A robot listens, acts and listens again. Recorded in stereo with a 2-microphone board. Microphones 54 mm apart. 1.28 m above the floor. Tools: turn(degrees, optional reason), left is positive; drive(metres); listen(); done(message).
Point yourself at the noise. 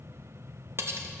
turn(degrees=-50, reason="The cutlery clinking: about 50° right or 130° right.")
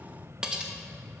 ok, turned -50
turn(degrees=-15, reason="So it is at 15° right.")
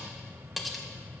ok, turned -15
done("Facing the cutlery clinking, under 1 m away.")